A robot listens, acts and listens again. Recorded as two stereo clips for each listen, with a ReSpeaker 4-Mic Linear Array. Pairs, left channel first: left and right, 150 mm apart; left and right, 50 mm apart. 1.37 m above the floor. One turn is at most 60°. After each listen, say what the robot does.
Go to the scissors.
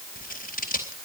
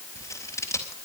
Turn 60° left.
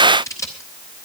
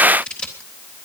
Turn 20° left.
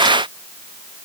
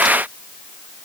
Keep listening.
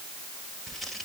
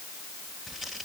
Drive 1.0 m forward.
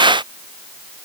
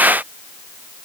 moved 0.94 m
Keep listening.
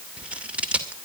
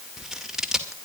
Turn 10° right.
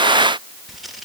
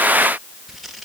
Drive 1.0 m forward.
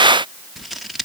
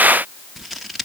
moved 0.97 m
Drive 1.0 m forward.
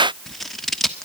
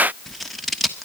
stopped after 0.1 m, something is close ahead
Arrived at the scissors, straight ahead.